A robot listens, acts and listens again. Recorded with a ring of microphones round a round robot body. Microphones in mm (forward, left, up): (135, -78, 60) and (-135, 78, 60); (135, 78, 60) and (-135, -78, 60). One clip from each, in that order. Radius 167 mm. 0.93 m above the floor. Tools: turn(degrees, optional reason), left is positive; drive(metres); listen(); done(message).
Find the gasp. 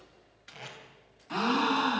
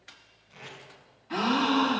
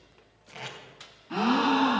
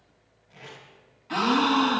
turn(degrees=-105, reason="The gasp: 105° right.")
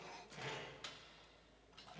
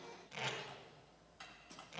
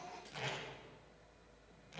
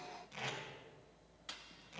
done("Facing where the gasp came from. I can't hear it now.")